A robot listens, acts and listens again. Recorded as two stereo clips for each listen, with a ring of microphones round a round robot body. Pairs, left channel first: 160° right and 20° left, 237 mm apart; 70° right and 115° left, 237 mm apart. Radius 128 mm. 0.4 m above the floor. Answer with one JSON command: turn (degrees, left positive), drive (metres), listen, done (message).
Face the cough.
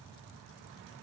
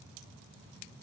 {"listen": true}
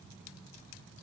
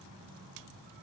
{"listen": true}
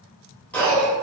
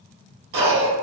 {"turn": 120}
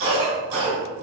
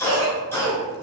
{"turn": 10}
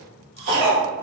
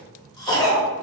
{"done": "Facing the cough, 1 to 2 m away."}